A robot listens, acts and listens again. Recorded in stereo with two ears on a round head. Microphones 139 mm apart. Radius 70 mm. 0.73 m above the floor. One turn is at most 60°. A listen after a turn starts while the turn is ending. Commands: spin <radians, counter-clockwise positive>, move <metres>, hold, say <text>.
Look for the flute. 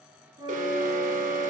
spin -0.52
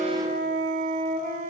spin -1.05
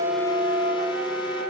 spin -1.05
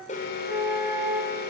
say Found it: a flute, straight ahead, over 4 m away.